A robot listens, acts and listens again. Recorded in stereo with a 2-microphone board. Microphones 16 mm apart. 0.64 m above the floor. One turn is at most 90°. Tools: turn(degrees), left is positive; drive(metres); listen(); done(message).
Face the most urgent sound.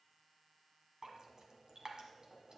listen()
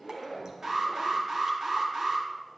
turn(degrees=-45)
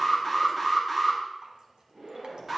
turn(degrees=-15)
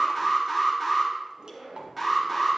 done("Facing the alarm.")